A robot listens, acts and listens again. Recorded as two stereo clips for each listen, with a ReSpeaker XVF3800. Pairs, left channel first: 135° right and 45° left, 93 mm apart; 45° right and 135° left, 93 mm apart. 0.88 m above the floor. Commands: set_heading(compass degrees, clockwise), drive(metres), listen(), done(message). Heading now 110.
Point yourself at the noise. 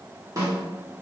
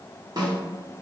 set_heading(15)
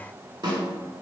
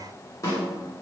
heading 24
set_heading(14)
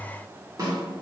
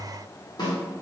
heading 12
done("Found it: a snare drum, straight ahead.")